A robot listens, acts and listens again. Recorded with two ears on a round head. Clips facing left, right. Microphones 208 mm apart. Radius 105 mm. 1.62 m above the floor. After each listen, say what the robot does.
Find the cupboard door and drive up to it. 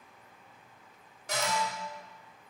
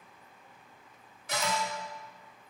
Turn 40° left.
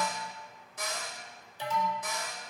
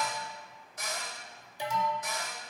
Turn 95° left.
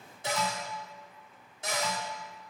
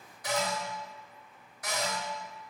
Turn 25° left.
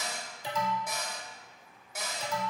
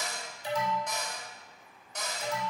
Drive 1.0 m forward.
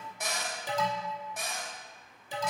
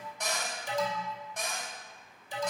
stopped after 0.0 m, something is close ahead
Blocked. The cupboard door is further on, straight ahead.